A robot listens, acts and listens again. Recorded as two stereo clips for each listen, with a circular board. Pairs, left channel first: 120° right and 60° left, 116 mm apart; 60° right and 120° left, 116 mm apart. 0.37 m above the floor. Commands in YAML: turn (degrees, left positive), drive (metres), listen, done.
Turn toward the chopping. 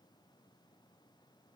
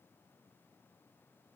listen: true
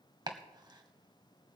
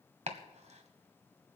turn: 110
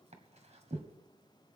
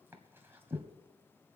turn: 50
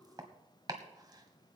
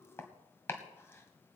turn: 10
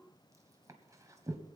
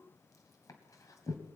done: "Found it: chopping, straight ahead, 1 to 2 m away."